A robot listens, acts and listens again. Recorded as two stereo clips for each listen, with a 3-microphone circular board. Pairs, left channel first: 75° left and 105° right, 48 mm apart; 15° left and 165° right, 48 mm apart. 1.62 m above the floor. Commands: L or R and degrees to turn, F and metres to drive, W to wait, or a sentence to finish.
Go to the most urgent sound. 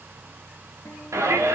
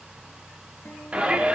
R95
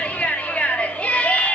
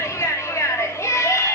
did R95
L10
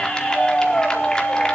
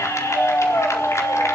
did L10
F1.0
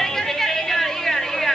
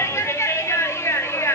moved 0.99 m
R10
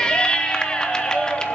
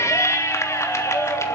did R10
F1.0
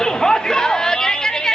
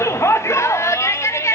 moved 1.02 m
F1.0
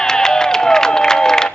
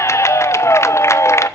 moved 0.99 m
F1.0
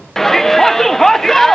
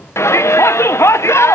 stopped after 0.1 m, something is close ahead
R10
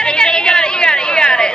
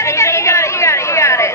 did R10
Arrived at the shout, straight ahead.